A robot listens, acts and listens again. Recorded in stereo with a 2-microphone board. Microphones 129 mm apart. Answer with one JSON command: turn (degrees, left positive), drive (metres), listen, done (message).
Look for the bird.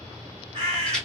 {"turn": -45}
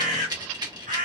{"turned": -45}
{"turn": -90}
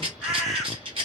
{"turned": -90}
{"done": "Found it: a bird, straight ahead, 1 to 2 m away."}